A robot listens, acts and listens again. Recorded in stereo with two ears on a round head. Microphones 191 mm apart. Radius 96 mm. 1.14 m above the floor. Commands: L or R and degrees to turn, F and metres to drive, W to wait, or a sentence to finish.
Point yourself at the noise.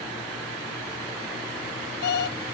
L50
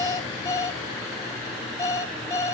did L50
L20
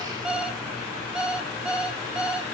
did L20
Facing the alarm clock, 1 to 2 m away.